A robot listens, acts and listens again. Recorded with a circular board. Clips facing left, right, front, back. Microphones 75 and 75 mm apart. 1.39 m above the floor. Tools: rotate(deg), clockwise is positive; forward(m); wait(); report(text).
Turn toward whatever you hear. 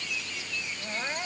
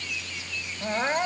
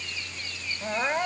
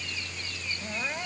rotate(45)
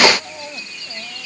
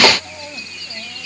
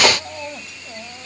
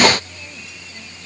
rotate(-10)
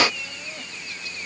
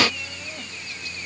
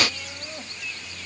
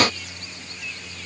wait()
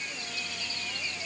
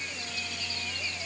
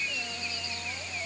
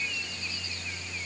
wait()
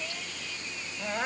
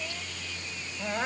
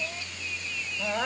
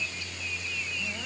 report("Facing the crying.")